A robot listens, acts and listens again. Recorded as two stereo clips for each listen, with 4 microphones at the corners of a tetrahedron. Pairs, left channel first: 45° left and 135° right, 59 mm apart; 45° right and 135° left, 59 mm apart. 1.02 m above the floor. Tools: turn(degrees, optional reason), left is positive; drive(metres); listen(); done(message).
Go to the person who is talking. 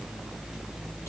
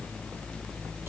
listen()
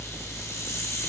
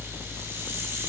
listen()
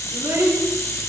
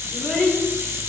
turn(degrees=-125, reason="The child speaking: 125° right.")
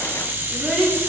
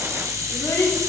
turn(degrees=-45, reason="The child speaking is now 45° right.")
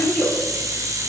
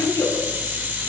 turn(degrees=-20, reason="The child speaking is now 20° right.")
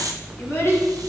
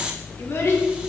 drive(metres=1.0)
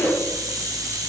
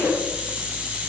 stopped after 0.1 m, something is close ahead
done("Something is in my way. I am facing the child speaking but have not reached it.")